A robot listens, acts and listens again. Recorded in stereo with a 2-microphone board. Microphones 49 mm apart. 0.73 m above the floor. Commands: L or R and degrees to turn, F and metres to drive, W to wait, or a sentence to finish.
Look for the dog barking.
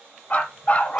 L30
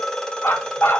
L120
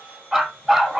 Facing the dog barking, 1 to 2 m away.